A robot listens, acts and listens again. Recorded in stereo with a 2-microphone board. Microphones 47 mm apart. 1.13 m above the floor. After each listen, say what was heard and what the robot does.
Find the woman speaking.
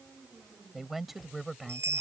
Turn 30° right.
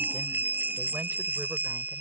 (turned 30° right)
Keep listening.
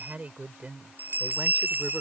So it is at 150° right. Turn 150° right.
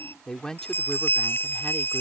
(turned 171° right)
The woman speaking is now 15° left. Turn 15° left.
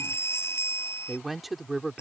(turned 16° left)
Found it: a woman speaking, straight ahead.